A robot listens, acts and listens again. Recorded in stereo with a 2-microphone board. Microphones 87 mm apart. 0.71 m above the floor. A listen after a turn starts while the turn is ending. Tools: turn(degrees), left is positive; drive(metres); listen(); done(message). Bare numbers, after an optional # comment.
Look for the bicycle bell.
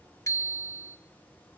# The bicycle bell: about 35° left or 145° left.
turn(35)
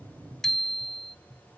done("Found it: a bicycle bell, straight ahead, 2 to 4 m away.")